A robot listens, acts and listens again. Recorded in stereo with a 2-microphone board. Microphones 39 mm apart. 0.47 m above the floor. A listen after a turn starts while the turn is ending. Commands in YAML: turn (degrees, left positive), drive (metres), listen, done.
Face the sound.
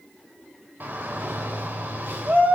turn: -55
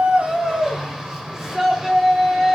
turn: -10
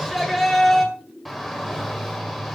done: "Found it: a shout, straight ahead."